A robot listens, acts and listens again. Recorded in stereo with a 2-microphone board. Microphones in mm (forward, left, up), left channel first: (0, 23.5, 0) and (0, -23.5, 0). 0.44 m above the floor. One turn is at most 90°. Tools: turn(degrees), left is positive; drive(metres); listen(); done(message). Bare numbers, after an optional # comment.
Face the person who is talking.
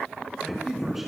turn(-30)
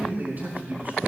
# So it is at 145° right.
turn(-90)
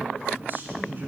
# The man speaking is now 55° right.
turn(-55)
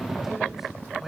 listen()
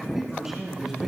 # The man speaking is now 10° right.
turn(-10)
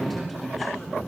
done("Found it: a man speaking, straight ahead, over 4 m away.")